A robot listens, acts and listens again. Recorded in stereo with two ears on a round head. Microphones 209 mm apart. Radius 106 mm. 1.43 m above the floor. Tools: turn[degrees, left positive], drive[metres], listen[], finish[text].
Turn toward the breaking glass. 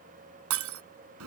Thought: The breaking glass: about 65° right or 115° right.
Action: turn[-65]
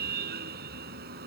Action: listen[]
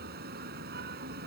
Action: finish[I heard breaking glass, but can't make it out now. It was about straight ahead or 50° right.]